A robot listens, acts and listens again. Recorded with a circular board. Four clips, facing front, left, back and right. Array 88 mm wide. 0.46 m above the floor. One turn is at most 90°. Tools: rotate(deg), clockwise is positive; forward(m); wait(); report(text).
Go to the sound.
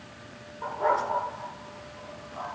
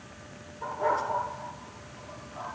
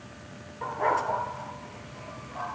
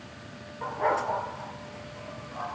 rotate(90)
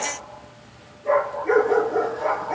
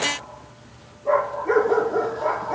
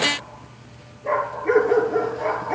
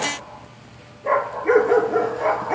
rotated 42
rotate(90)
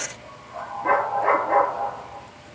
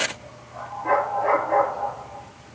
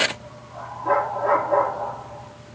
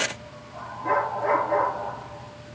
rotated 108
forward(1.0)
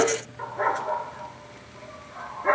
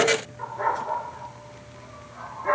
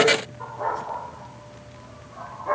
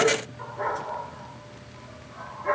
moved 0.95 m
forward(1.0)
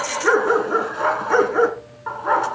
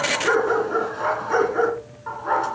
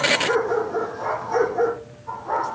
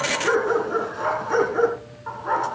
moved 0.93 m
forward(1.0)
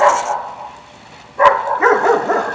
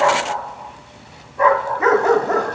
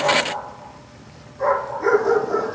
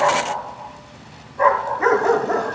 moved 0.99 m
forward(1.0)
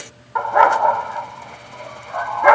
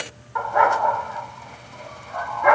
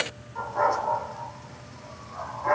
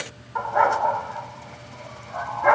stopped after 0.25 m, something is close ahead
report("I am next to the dog barking.")